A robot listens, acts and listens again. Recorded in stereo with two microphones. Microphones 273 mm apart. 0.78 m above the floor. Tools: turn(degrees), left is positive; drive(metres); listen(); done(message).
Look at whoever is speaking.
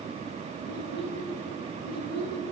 turn(degrees=70)
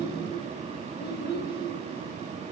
turn(degrees=40)
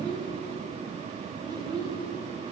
turn(degrees=-15)
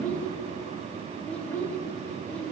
done("Facing the child speaking, 1 to 2 m away.")